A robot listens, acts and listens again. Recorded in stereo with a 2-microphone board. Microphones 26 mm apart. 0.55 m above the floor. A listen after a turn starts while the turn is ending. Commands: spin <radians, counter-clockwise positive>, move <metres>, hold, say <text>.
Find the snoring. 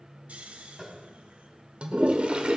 spin -1.22
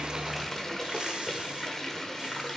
hold
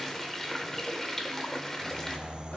spin -0.70
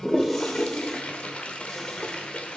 hold
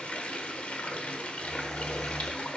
say Found it: snoring, straight ahead.